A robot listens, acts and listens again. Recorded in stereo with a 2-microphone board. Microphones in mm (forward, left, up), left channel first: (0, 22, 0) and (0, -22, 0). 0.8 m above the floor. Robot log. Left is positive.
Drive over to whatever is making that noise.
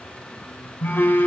note: The phone buzzing: about 60° left or 120° left.
cmd yaw +60
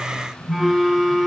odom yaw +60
cmd fwd 1.0
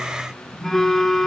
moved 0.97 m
cmd fwd 1.0
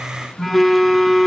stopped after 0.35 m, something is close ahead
end: Arrived at the phone buzzing, straight ahead.